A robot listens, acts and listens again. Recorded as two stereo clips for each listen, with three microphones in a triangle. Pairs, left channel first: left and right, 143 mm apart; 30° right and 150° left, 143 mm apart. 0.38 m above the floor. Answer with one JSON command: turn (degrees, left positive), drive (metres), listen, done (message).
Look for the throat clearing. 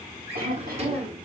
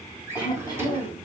{"turn": -95}
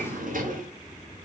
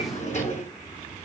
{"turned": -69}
{"turn": -25}
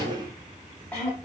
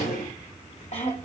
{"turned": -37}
{"turn": 10}
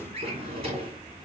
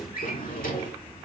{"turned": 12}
{"listen": true}
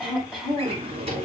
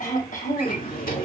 {"done": "Found it: throat clearing, straight ahead."}